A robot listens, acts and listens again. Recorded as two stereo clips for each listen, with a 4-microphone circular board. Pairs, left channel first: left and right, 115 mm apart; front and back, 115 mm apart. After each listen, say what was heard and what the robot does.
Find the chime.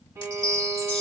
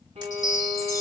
The chime: 60° left. Turn 60° left.
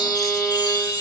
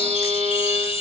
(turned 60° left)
The chime is now 35° left. Turn 35° left.
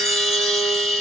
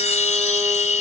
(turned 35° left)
Found it: a chime, straight ahead, under 1 m away.